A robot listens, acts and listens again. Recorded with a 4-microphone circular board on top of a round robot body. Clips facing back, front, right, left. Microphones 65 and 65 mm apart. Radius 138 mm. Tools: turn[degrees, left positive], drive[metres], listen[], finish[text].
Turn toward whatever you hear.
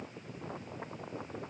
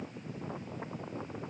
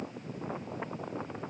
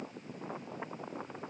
Action: listen[]
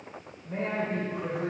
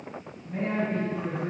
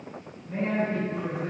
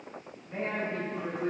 Thought: The man speaking: straight behind.
Action: turn[180]
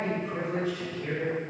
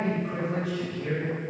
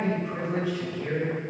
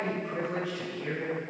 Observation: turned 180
Action: finish[Found it: a man speaking, straight ahead, 2 to 4 m away.]